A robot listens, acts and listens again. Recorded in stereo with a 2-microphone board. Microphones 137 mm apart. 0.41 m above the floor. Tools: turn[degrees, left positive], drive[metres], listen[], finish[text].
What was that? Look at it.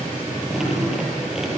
Action: turn[-30]
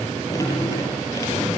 Thought: So it is at 25° left.
Action: turn[25]
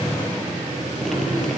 Action: finish[Facing the dripping, over 4 m away.]